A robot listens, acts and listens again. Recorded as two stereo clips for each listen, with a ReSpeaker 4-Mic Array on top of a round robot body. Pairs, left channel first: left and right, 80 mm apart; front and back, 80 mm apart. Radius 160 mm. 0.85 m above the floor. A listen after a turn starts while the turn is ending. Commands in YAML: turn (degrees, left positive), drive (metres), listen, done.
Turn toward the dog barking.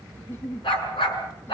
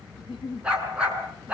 turn: 105
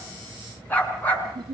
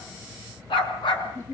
turn: 25
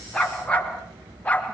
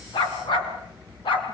turn: 20
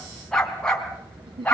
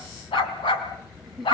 turn: 15
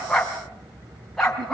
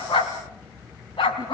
done: "Facing the dog barking, over 4 m away."